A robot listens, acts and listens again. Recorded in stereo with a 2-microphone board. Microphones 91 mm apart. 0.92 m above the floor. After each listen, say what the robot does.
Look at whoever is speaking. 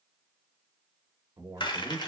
Turn 50° right.
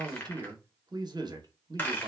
Turn 70° right.
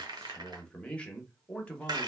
Turn 15° left.
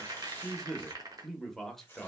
Found it: a man speaking, straight ahead, under 1 m away.